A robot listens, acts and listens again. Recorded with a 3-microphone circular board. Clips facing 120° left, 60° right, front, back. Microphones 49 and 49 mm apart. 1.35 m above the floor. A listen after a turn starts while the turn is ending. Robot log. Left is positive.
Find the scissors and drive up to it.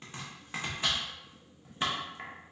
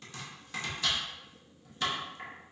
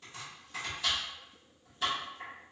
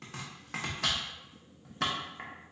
cmd idle
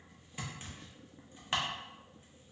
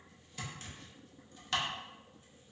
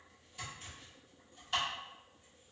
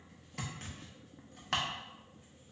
cmd idle
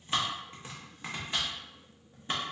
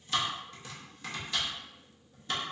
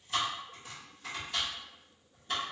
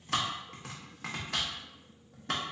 end: I can't make out scissors to turn to.